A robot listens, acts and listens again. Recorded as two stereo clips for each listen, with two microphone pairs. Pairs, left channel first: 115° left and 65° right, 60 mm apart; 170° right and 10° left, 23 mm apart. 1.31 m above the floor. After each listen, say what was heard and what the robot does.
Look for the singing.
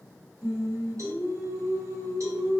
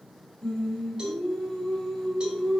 The singing: 70° right. Turn 70° right.
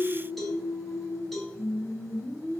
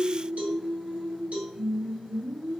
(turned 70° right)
The singing is now 35° left. Turn 35° left.
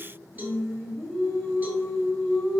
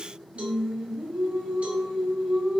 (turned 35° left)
The singing is now 15° left. Turn 15° left.
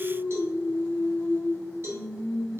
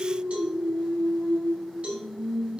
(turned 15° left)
Found it: singing, straight ahead, 2 to 4 m away.